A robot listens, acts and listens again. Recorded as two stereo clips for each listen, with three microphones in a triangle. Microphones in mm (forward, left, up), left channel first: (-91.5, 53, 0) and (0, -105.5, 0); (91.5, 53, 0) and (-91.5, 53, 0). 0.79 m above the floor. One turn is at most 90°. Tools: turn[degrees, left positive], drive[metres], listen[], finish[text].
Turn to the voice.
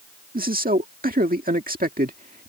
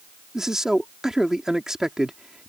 Thought: The man speaking: 95° right.
Action: turn[-90]
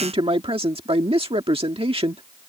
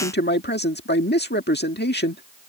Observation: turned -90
Action: finish[Facing the man speaking.]